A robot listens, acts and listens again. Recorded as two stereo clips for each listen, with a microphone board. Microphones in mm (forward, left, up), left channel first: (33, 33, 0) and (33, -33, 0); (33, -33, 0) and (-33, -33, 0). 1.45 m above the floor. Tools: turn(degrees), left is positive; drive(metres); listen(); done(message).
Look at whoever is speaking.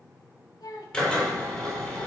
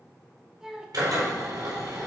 turn(degrees=100)
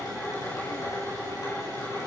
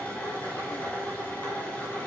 listen()
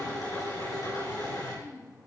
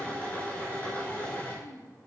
turn(degrees=50)
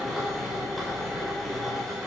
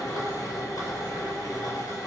listen()
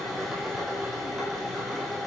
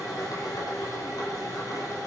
listen()
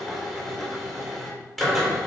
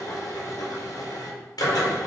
done("I heard a child speaking from this way, but can't make it out now.")